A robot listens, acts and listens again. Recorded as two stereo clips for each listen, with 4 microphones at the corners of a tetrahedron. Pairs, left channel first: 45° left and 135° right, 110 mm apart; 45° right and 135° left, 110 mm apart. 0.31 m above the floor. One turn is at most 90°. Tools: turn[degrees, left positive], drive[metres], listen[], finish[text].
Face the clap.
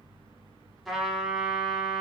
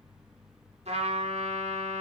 Action: listen[]
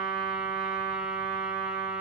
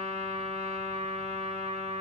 Action: listen[]
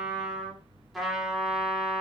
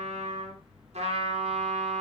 Action: finish[I can't make out a clap to turn to.]